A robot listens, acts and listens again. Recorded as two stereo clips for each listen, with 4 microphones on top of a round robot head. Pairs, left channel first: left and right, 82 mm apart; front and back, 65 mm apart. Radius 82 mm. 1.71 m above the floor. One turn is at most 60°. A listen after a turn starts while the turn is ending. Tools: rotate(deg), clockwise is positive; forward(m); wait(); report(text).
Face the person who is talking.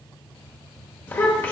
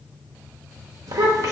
rotate(-60)
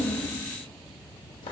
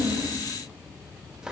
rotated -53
rotate(-60)
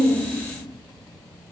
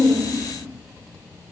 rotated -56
rotate(-45)
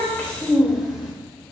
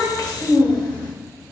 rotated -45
report("Facing the child speaking.")